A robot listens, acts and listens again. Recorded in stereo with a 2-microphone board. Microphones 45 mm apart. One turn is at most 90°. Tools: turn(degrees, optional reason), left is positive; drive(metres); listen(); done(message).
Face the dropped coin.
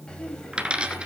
turn(degrees=-25, reason="The dropped coin: about 25° right or 155° right.")
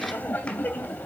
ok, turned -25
listen()
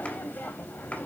done("I heard a dropped coin, but can't make it out now. It was about straight ahead or 130° right.")